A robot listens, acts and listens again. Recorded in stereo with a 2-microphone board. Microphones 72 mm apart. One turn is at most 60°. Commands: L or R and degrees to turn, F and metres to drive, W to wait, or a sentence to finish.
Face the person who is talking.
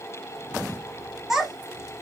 R30
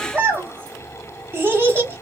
R60
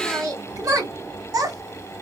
R60
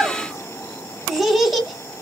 Facing the child speaking, 1 to 2 m away.